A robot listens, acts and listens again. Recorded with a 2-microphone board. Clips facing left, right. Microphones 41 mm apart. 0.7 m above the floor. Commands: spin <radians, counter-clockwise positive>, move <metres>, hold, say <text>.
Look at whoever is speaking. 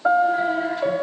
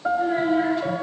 spin -1.31
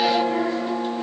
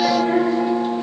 hold
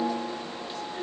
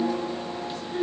spin -0.52
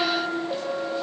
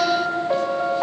hold
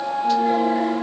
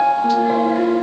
hold
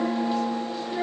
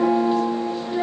say Found it: a child speaking, straight ahead, over 4 m away.